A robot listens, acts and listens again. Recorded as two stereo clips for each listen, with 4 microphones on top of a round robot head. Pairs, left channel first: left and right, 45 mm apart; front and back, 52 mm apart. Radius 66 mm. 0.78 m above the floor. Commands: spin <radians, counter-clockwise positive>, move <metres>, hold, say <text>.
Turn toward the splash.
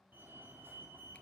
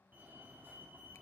hold
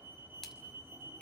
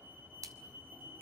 spin 3.05
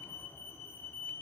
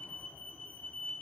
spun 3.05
say I heard a splash from this way, but can't make it out now.